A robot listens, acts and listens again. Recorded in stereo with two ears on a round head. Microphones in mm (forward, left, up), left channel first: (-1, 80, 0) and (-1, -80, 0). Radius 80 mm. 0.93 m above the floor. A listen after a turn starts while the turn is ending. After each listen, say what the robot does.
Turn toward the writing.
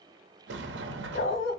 Keep listening.
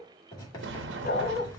Turn 25° left.
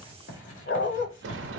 Turn 130° left.
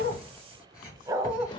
Turn 20° left.
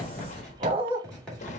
Facing the writing, 2 to 4 m away.